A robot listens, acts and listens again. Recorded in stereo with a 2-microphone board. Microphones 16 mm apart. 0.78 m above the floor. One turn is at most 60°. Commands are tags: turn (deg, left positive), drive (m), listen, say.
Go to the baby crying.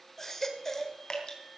<turn deg="20"/>
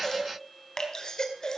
<turn deg="60"/>
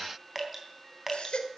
<turn deg="60"/>
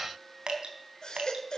<turn deg="50"/>
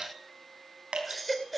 <drive m="1.0"/>
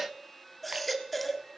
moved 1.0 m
<turn deg="10"/>
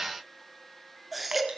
<drive m="1.0"/>
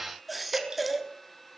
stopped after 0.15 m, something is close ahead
<say>I am next to the baby crying.</say>